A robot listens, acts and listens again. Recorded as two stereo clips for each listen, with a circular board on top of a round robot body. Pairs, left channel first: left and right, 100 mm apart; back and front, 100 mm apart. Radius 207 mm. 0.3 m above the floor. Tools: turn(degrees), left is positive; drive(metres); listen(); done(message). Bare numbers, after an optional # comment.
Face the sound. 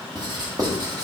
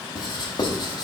# The writing: 135° right.
turn(-135)
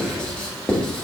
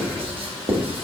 # The writing is now 15° left.
turn(15)
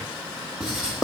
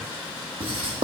done("Found it: writing, straight ahead, 1 to 2 m away.")